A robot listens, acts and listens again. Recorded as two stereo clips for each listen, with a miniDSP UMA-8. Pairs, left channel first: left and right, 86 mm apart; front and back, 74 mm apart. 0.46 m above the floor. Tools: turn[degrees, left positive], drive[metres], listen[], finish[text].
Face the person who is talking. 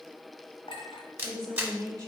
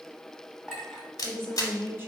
Thought: The woman speaking: 130° right.
Action: turn[-130]
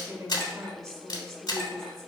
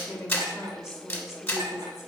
Thought: The woman speaking is now 45° right.
Action: turn[-45]
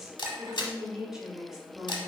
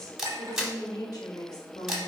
Action: finish[Facing the woman speaking, 1 to 2 m away.]